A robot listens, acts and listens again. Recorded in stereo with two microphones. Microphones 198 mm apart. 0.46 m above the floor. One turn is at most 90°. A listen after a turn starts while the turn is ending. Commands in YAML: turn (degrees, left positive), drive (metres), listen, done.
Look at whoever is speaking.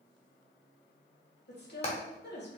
turn: 60
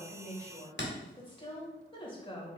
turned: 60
turn: 30
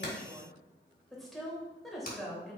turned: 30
done: "Found it: a woman speaking, straight ahead."